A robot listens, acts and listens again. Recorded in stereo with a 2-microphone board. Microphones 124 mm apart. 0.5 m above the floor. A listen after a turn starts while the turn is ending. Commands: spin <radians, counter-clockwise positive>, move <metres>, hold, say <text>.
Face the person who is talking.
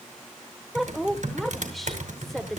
spin 0.52
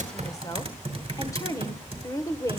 spin 2.62
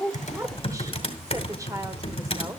hold
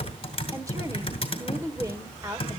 spin -0.52
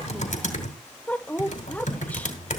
spin 0.26
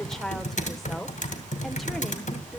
say Facing the woman speaking.